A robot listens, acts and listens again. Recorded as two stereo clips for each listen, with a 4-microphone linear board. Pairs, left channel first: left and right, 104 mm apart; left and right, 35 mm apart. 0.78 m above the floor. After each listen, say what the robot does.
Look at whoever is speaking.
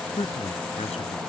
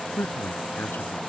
Turn 90° left.
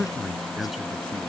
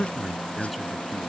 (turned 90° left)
Found it: a man speaking, straight ahead.